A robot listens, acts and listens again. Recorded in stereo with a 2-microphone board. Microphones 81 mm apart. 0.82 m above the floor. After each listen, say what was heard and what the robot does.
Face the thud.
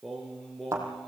The thud: about 40° right or 140° right. Turn 40° right.
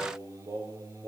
Keep listening.
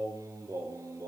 I heard a thud, but can't make it out now. It was about straight ahead or 100° right.